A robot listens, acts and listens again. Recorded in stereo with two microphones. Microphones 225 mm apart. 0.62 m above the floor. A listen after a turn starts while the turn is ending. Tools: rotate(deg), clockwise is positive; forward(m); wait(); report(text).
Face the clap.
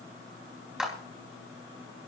rotate(30)
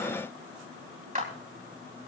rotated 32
rotate(145)
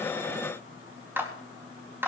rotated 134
rotate(10)
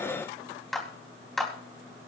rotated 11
report("Facing the clap.")